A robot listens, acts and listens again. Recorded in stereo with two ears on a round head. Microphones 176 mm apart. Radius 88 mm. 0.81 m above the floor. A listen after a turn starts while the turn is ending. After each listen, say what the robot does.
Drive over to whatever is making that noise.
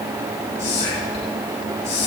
Turn 35° left.
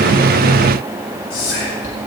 Turn 110° left.
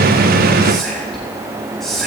Drive 1.0 m forward.
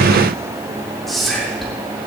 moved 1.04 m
Drive 1.0 m forward.
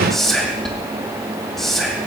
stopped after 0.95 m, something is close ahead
Arrived at the whispering, straight ahead.